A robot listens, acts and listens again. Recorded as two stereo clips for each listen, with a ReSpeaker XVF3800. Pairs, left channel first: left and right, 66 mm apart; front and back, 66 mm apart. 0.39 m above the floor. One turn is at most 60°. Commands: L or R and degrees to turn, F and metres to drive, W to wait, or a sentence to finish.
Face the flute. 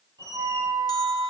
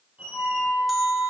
R60
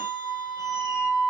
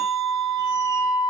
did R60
Found it: a flute, straight ahead, 2 to 4 m away.